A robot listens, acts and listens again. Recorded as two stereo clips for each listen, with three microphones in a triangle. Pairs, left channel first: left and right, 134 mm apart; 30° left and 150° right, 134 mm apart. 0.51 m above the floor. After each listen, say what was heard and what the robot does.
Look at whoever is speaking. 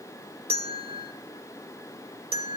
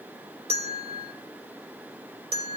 Keep listening.
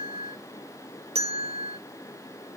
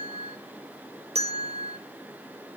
Keep listening.
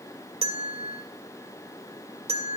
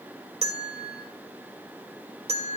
I can't make out anyone speaking, only a bell.